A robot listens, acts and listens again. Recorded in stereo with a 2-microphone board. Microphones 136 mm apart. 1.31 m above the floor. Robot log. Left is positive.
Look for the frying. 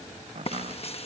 note: The frying: about 50° left or 130° left.
cmd yaw +50
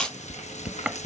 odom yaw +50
note: So it is at 75° left.
cmd yaw +75
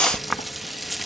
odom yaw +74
end: Found it: frying, straight ahead.